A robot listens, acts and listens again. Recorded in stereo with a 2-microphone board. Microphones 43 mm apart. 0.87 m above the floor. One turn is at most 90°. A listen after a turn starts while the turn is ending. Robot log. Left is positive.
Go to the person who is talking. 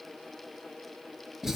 cmd idle
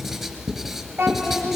note: The child speaking: about 65° right or 115° right.
cmd yaw -65
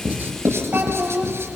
note: So it is at 50° right.
cmd yaw -50
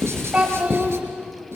note: The child speaking is now 20° right.
cmd yaw -20
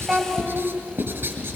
cmd idle
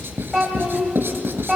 cmd fwd 1.0
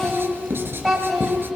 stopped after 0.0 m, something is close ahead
end: Blocked. The child speaking is further on, straight ahead.